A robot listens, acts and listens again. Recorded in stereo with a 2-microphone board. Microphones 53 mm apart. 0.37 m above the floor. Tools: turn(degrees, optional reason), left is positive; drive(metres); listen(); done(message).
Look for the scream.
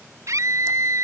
turn(degrees=-70, reason="The scream: about 70° right or 110° right.")
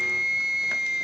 turn(degrees=-10, reason="So it is at 10° right.")
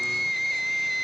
done("Facing the scream.")